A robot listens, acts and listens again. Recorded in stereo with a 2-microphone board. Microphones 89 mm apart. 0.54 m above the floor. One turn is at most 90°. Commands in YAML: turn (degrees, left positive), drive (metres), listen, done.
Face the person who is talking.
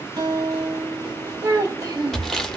turn: -45
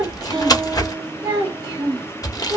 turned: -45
turn: -45
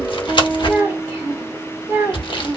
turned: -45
turn: -25
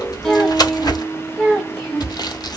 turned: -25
done: "Found it: a child speaking, straight ahead."